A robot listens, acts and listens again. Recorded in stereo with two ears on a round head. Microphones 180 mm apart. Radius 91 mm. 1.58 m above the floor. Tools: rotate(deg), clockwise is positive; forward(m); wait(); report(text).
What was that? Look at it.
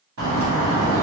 rotate(75)
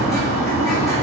report("Found it: a bird, straight ahead.")